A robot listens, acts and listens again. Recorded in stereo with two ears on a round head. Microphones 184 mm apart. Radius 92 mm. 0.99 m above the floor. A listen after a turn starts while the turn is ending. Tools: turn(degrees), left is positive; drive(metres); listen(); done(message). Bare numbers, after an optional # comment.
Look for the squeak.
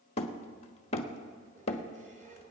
# The squeak: about 40° right or 140° right.
turn(-40)
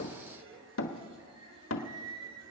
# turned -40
# So it is at 100° right.
turn(-100)
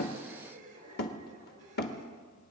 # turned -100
# The squeak is now 40° right.
turn(-40)
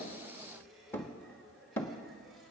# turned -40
done("Found it: a squeak, straight ahead.")